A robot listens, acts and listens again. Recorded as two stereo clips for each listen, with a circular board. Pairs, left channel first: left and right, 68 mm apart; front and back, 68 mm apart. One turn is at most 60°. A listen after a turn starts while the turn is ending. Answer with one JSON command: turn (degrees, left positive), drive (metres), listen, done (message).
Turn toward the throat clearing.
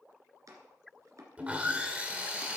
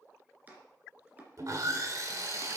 {"listen": true}
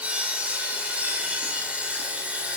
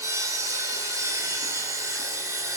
{"listen": true}
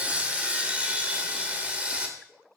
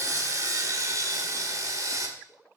{"done": "I can't make out throat clearing to turn to."}